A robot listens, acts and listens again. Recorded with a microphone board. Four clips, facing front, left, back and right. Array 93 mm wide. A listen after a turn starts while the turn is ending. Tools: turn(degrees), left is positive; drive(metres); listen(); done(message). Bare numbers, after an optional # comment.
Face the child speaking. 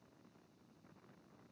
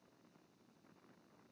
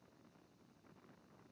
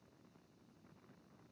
listen()
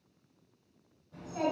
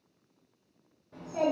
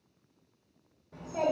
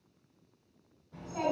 # The child speaking: 135° left.
turn(135)
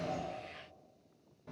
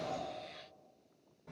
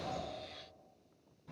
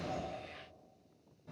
# The child speaking is now 20° left.
turn(20)
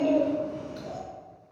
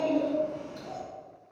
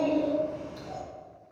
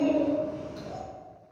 done("Facing the child speaking.")